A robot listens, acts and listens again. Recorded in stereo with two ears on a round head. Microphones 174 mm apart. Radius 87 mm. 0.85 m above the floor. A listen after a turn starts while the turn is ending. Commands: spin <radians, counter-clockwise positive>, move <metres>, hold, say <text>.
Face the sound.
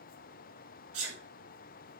spin -1.57
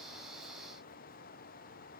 say I heard a sneeze from this way, but can't make it out now.